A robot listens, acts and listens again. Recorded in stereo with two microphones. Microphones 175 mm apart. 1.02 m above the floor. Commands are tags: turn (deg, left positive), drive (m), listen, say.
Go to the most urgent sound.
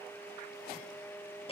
<listen/>
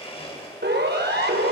<turn deg="-90"/>
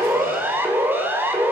<turn deg="-10"/>
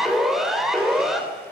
<drive m="1.0"/>
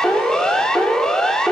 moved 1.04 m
<drive m="1.0"/>
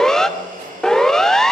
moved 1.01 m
<drive m="1.0"/>
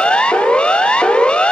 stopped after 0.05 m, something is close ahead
<say>Arrived at the siren, straight ahead.</say>